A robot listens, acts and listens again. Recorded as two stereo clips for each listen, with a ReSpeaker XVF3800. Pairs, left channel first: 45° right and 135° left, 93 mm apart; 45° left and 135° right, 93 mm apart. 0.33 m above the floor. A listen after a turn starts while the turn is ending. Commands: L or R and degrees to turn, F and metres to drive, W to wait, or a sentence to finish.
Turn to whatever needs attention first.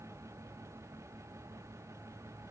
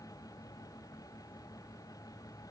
W
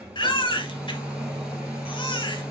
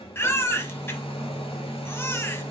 R20
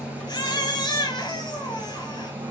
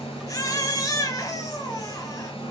Facing the baby crying.